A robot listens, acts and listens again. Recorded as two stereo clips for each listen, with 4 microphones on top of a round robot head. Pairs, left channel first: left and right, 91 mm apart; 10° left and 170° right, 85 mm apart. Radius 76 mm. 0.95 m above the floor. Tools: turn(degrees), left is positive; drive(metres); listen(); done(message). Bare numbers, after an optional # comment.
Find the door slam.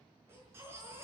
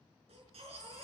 listen()
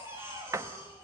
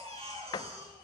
# The door slam: 35° right.
turn(-35)
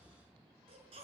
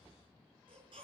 done("I heard a door slam from this way, but can't make it out now.")